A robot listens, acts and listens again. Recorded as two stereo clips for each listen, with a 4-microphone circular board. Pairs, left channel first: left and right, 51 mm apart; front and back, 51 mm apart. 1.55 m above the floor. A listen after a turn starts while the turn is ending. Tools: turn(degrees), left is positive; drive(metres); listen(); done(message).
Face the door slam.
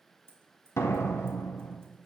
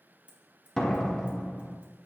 turn(degrees=75)
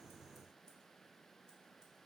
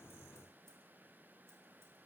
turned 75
done("Facing where the door slam came from. I can't hear it now.")